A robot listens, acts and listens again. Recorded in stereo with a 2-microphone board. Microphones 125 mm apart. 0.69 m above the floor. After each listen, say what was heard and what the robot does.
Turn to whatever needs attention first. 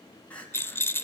Turn 30° left.
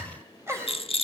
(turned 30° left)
So it is at 20° right. Turn 20° right.
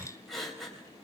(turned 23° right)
Found it: crying, straight ahead, 2 to 4 m away.